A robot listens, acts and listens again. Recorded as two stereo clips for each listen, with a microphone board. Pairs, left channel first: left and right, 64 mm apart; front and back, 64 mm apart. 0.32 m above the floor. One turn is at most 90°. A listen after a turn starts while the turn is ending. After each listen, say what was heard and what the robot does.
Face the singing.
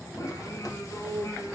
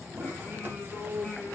The singing: 75° left. Turn 75° left.
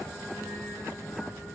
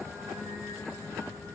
The singing is now 10° right. Turn 10° right.
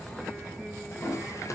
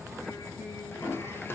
Keep listening.
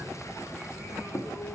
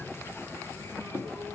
Keep listening.
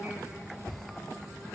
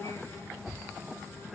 The singing is now 10° right. Turn 10° right.
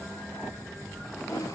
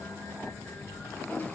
Keep listening.
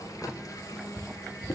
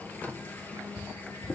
Keep listening.
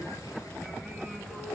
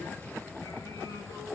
I heard singing from this way, but can't make it out now.